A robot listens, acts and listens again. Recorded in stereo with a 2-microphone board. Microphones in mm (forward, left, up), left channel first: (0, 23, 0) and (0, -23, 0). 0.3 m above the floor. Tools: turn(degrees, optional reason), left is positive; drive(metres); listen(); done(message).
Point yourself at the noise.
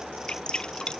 turn(degrees=15, reason="The dripping: about 15° left or 165° left.")
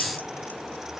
listen()
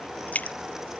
turn(degrees=150, reason="So it is at 150° left.")
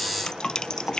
turn(degrees=20, reason="The dripping is now 20° left.")
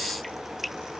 done("Found it: dripping, straight ahead.")